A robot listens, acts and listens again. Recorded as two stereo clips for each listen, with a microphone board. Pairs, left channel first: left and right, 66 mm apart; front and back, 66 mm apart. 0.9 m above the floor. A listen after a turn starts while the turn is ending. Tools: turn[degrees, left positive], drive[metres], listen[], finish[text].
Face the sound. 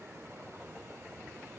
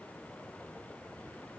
Action: listen[]
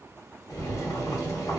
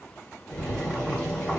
Thought: The boiling: 80° left.
Action: turn[80]
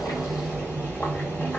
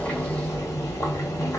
Thought: The boiling is now 30° left.
Action: turn[30]
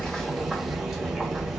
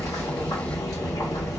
Action: finish[Found it: boiling, straight ahead, 1 to 2 m away.]